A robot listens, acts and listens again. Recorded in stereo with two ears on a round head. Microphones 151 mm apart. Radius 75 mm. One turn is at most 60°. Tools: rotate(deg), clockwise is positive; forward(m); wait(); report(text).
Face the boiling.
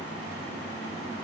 wait()
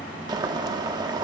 rotate(25)
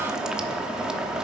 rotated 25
report("Facing the boiling, under 1 m away.")